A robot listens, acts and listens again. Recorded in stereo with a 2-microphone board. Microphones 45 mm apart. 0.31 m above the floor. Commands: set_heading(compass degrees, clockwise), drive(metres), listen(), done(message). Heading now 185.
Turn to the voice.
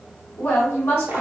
set_heading(140)
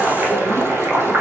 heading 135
listen()
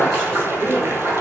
listen()
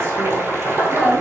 set_heading(125)
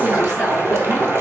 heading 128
done("Found it: a woman speaking, straight ahead.")